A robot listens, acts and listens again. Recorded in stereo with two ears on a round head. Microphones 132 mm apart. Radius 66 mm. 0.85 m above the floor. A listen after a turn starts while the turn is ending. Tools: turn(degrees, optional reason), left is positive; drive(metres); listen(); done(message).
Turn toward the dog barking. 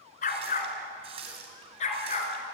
turn(degrees=45, reason="The dog barking: about 45° left or 135° left.")
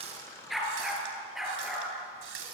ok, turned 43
done("Facing the dog barking, over 4 m away.")